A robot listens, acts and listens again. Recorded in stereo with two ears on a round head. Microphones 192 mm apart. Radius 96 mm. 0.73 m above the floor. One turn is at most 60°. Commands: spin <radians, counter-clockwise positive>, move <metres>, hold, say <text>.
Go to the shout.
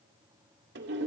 hold
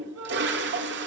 spin -1.05
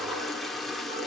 spin -0.52
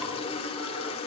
hold
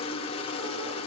say I heard a shout from this way, but can't make it out now. I did not reach it.